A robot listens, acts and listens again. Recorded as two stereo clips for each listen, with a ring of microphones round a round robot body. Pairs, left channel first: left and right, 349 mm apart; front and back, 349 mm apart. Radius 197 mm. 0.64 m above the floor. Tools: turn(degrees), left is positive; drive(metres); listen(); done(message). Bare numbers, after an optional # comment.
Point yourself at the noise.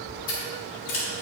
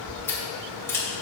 # The scissors: 85° left.
turn(85)
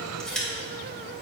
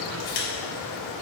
done("Facing the scissors, 2 to 4 m away.")